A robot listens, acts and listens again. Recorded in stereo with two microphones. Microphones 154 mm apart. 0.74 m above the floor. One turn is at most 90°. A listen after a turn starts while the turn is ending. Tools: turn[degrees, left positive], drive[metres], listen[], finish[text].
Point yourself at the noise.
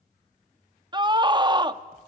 Thought: The scream: about 30° right or 150° right.
Action: turn[-30]
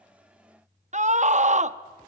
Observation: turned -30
Thought: So it is at 115° right.
Action: turn[-90]
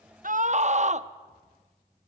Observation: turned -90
Thought: The scream is now 60° right.
Action: turn[-60]
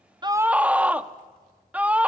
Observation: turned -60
Thought: The scream is now 10° right.
Action: turn[-10]
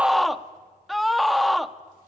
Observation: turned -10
Action: finish[Facing the scream, under 1 m away.]